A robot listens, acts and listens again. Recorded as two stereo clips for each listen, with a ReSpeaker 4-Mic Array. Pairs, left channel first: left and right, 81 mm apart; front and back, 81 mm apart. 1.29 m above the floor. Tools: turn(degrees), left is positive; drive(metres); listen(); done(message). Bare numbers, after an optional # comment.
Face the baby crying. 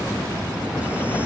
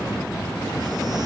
listen()
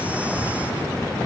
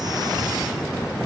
listen()
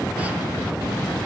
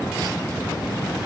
done("I can't make out a baby crying.")